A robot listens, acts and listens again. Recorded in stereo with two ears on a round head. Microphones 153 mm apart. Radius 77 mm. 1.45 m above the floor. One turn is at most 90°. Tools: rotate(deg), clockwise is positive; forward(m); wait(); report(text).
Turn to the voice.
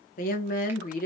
rotate(-50)
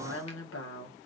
rotate(-75)
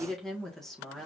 report("Found it: a woman speaking, straight ahead.")